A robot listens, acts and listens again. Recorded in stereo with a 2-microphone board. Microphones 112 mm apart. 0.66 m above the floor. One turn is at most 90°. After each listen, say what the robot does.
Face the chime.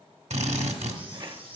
Turn 50° right.
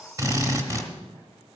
Keep listening.
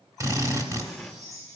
Turn 80° right.
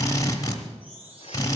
Turn 15° right.
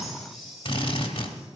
Found it: a chime, straight ahead, over 4 m away.